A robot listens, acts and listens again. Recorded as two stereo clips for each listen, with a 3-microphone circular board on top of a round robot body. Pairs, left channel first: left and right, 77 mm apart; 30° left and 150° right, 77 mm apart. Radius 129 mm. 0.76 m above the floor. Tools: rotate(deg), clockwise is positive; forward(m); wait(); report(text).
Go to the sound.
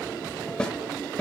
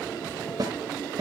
rotate(-165)
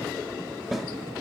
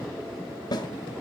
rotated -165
forward(1.0)
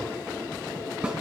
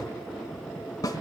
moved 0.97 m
rotate(15)
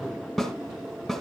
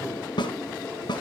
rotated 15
forward(1.0)
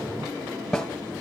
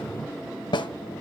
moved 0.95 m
forward(1.0)
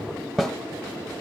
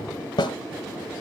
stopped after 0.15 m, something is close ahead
report("I am next to the snare drum.")